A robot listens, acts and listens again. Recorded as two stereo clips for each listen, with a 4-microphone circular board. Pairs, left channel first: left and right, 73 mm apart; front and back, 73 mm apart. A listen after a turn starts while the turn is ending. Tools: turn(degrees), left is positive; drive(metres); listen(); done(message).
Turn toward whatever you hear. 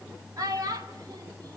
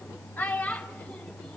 turn(degrees=-75)
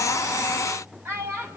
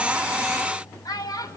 turn(degrees=-35)
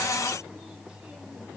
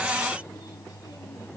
listen()
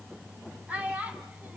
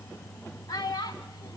turn(degrees=-20)
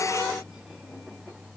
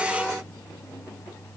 listen()
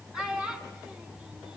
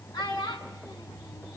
done("Facing the child speaking, over 4 m away.")